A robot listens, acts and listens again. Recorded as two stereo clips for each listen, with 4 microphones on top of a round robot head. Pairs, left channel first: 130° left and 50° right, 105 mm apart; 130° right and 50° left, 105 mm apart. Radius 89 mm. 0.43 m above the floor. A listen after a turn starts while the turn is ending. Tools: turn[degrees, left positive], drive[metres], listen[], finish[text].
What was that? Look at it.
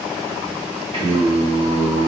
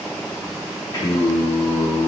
Thought: The singing: 60° right.
Action: turn[-60]
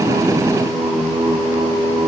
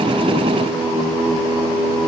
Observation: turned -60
Thought: The singing is now 30° left.
Action: turn[30]
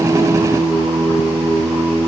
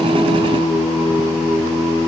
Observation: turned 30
Thought: The singing is now 35° left.
Action: turn[35]
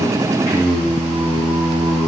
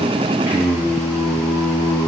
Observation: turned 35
Thought: The singing is now 15° right.
Action: turn[-15]
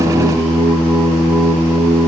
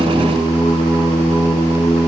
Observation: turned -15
Action: finish[Facing the singing, 1 to 2 m away.]